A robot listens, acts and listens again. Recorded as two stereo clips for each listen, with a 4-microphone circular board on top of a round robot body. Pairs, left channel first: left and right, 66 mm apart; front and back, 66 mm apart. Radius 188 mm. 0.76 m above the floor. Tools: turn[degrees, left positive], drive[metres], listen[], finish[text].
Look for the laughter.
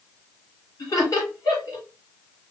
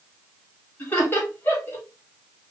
Thought: The laughter: 60° left.
Action: turn[60]
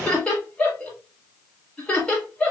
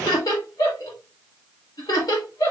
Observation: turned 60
Thought: The laughter is now 15° left.
Action: turn[15]
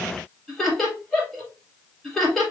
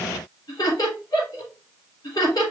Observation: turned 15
Action: finish[Found it: laughter, straight ahead, 2 to 4 m away.]